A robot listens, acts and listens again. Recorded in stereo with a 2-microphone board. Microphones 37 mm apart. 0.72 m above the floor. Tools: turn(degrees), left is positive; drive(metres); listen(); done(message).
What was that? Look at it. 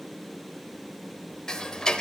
turn(degrees=20)
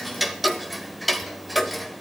done("Found it: ticking, straight ahead.")